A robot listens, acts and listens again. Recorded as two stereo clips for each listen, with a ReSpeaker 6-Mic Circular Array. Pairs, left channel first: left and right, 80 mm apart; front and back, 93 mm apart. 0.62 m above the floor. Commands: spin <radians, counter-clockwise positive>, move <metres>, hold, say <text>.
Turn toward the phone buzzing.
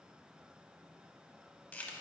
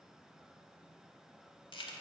hold
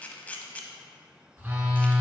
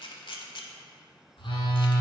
spin -0.44
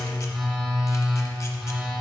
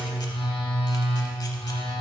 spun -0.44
say Found it: a phone buzzing, straight ahead, 1 to 2 m away.